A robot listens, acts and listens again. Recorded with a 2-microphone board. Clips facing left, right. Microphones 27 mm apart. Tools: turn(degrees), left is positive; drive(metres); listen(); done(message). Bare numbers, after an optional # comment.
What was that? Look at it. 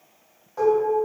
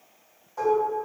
# The dishes clattering: about 25° left or 155° left.
turn(25)
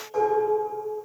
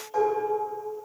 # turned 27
done("Found it: dishes clattering, straight ahead.")